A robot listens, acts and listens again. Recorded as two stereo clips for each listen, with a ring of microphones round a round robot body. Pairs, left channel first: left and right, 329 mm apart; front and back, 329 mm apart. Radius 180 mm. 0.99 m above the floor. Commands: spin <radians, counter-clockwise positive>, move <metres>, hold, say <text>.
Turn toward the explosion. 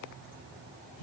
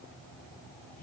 hold
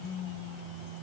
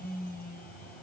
hold
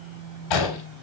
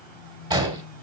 spin 1.83
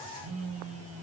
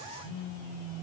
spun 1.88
say I heard an explosion from this way, but can't make it out now.